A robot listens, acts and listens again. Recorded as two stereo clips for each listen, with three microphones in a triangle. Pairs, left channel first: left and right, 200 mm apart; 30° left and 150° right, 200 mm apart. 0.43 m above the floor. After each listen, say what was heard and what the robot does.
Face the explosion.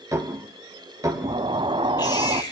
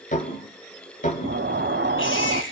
The explosion: 155° right. Turn 155° right.
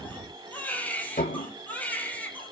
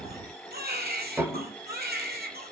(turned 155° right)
Facing where the explosion came from. I can't hear it now.